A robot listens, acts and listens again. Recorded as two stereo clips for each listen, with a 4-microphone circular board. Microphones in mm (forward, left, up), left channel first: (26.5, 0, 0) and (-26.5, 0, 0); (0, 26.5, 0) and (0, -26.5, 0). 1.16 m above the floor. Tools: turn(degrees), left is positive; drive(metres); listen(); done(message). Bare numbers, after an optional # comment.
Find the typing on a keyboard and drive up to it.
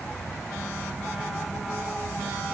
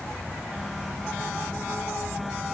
listen()
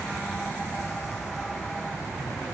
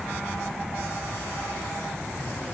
listen()
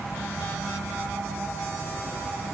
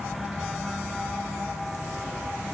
done("I can't make out typing on a keyboard to turn to.")